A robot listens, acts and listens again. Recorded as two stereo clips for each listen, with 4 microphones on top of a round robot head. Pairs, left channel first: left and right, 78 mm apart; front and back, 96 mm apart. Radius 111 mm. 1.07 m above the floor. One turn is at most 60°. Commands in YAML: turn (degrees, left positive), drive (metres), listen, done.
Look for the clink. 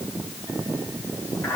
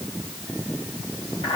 listen: true
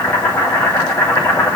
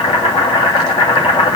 listen: true
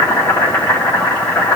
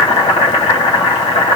done: "I can't make out a clink to turn to."